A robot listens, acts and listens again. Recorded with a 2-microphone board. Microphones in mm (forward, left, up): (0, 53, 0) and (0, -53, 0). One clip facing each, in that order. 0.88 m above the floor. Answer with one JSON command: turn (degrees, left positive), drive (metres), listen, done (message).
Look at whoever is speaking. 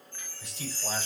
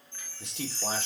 {"turn": -70}
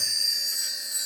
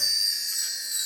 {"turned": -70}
{"listen": true}
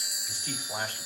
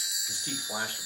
{"turn": -15}
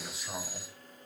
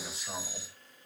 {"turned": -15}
{"done": "Found it: a man speaking, straight ahead."}